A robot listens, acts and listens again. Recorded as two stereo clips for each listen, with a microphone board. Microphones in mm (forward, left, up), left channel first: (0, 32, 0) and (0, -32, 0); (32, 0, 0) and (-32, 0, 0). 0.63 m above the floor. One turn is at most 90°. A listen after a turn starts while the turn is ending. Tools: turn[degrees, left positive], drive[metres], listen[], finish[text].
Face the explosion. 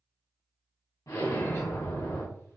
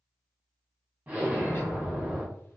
Thought: The explosion: 115° left.
Action: turn[90]
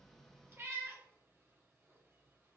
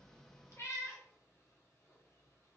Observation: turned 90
Thought: Nothing new. It was at 25° left.
Action: turn[25]
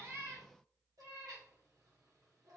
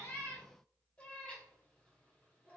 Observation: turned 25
Action: finish[Facing where the explosion came from. I can't hear it now.]